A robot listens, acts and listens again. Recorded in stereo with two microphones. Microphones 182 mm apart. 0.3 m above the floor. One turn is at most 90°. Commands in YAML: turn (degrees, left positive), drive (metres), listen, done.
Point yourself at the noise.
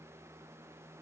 listen: true
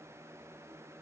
listen: true
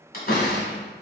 turn: 55
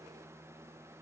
listen: true
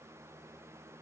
done: "I heard a door slam, but can't make it out now. It was about straight ahead or 70° left."